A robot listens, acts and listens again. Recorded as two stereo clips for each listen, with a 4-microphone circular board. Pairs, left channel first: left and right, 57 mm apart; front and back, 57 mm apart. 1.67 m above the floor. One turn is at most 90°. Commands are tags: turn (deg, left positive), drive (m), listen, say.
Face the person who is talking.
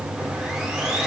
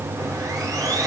<listen/>
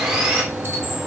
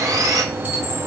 <listen/>
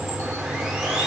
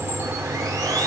<say>I can't make out anyone speaking, only sawing.</say>